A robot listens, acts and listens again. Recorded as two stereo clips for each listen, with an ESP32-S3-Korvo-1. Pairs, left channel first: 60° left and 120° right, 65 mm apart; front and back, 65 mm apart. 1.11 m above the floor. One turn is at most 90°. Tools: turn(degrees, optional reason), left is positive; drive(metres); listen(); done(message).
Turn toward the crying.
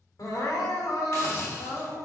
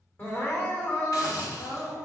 turn(degrees=55, reason="The crying: 55° left.")
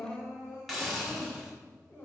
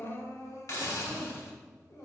done("Facing the crying, 2 to 4 m away.")